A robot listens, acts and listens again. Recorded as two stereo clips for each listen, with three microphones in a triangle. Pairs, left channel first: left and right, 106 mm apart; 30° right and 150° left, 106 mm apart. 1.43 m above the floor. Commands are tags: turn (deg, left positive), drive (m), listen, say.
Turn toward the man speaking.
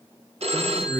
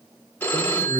<turn deg="165"/>
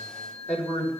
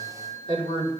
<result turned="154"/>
<turn deg="10"/>
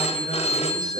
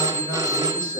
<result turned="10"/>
<listen/>
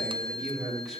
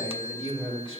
<say>Found it: a man speaking, straight ahead, over 4 m away.</say>